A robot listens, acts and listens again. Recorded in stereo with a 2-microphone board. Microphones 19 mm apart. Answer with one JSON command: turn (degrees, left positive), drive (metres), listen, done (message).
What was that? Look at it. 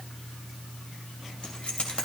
{"turn": 90}
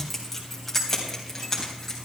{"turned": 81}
{"turn": 15}
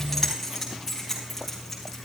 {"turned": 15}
{"done": "Facing the keys jangling."}